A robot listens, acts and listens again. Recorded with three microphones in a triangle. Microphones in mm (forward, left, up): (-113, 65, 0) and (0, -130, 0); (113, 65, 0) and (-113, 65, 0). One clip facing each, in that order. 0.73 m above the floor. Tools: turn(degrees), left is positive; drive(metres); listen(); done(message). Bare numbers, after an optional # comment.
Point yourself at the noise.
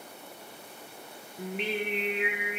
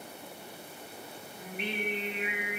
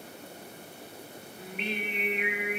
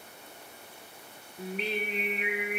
# The singing: 125° left.
turn(125)
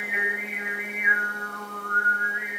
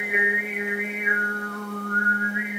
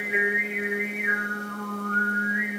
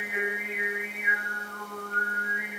# The singing is now 25° right.
turn(-25)
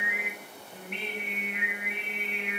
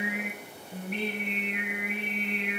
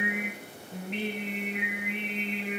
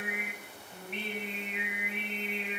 # The singing is now 10° right.
turn(-10)
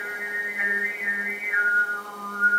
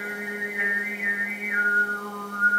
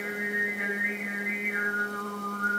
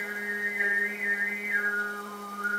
done("Found it: singing, straight ahead.")